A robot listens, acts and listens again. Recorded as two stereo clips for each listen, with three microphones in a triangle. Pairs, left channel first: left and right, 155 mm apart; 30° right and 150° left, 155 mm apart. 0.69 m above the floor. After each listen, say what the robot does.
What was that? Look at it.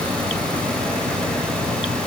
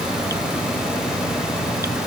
Keep listening.
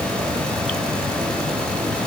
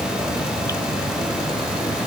Keep listening.
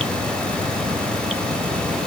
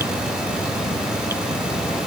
I can't make out anything to turn to.